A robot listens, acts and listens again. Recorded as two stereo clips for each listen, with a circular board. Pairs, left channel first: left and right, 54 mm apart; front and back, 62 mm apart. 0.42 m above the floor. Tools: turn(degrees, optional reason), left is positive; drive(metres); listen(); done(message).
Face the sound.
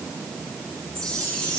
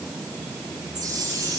turn(degrees=170, reason="The chime: 170° left.")
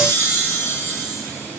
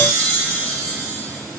turn(degrees=70, reason="The chime is now 70° left.")
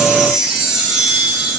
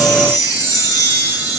done("Facing the chime, 1 to 2 m away.")